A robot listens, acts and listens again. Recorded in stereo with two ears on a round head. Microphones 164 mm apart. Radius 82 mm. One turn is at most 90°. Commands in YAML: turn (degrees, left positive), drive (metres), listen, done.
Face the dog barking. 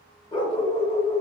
turn: 30
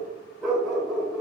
done: "Facing the dog barking."